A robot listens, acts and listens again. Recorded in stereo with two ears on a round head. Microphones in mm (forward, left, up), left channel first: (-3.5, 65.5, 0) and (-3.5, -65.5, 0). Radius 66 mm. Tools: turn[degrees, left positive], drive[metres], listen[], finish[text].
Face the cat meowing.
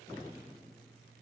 Action: listen[]
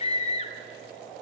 Action: listen[]
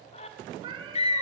Thought: The cat meowing: about 35° right or 145° right.
Action: turn[-35]
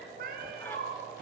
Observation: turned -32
Thought: So it is at 110° right.
Action: turn[-110]
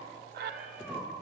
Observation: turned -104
Action: finish[Facing the cat meowing, over 4 m away.]